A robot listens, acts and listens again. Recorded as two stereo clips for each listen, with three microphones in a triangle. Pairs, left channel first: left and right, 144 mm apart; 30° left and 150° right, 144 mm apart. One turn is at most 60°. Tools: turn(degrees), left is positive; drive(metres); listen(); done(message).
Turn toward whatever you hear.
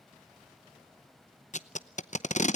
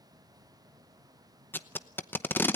turn(degrees=60)
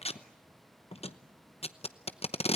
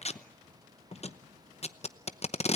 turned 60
turn(degrees=60)
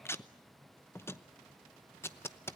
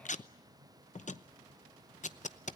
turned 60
turn(degrees=20)
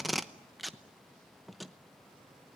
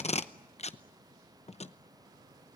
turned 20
done("Facing the tape being pulled, under 1 m away.")